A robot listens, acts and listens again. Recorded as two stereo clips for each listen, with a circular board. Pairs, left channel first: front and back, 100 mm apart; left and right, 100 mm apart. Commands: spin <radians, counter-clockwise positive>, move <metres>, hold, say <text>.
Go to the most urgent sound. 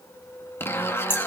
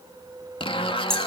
hold
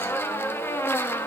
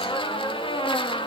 hold
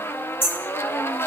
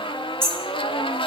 say I can't make out anything urgent to turn to.